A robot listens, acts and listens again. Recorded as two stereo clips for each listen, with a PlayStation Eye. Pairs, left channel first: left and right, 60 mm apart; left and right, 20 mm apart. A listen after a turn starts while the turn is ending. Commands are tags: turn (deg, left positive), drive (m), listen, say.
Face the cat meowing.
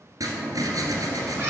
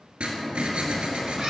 <turn deg="-40"/>
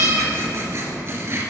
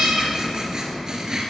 <turn deg="-100"/>
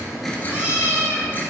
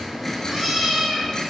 <turn deg="-20"/>
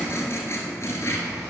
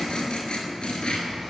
<listen/>
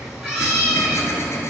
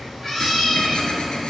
<say>Found it: a cat meowing, straight ahead.</say>